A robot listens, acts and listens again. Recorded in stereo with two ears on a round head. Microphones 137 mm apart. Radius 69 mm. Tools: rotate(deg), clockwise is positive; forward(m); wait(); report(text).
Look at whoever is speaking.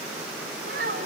rotate(65)
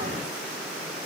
wait()
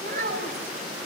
rotate(55)
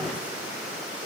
wait()
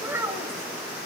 rotate(15)
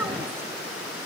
wait()
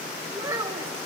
rotate(20)
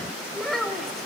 report("Found it: a child speaking, straight ahead.")